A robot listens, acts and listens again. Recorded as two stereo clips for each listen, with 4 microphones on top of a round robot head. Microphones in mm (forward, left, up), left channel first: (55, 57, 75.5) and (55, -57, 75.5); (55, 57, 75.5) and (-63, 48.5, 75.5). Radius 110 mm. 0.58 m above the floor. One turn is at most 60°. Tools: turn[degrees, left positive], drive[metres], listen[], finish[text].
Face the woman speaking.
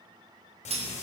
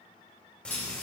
Action: listen[]
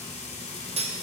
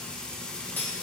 Action: listen[]
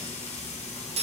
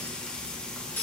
Action: finish[I can't make out a woman speaking, only frying and cutlery clinking.]